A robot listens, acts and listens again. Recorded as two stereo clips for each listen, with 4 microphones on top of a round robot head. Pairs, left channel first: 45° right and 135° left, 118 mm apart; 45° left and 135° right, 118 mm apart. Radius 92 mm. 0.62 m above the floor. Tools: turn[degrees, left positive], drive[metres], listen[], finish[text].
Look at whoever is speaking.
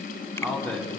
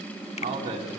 Thought: The man speaking: 125° right.
Action: turn[-125]
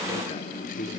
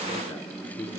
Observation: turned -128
Action: listen[]
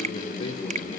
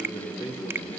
Action: finish[Found it: a man speaking, straight ahead, over 4 m away.]